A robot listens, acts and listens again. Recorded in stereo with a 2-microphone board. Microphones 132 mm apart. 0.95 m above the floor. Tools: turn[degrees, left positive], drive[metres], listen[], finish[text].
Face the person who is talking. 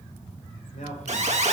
Thought: The man speaking: about 75° left or 105° left.
Action: turn[75]
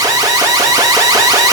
Action: listen[]
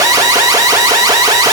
Action: listen[]
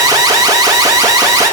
Action: finish[I heard a man speaking, but can't make it out now. It was about straight ahead or 30° left.]